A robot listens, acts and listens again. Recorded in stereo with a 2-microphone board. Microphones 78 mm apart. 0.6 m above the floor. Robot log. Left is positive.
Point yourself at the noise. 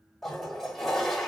cmd yaw +30
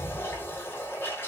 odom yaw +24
note: So it is at 150° left.
cmd yaw +150
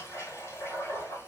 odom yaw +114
note: The toilet flushing is now 35° left.
cmd yaw +35
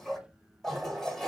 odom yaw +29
end: Found it: a toilet flushing, straight ahead, 1 to 2 m away.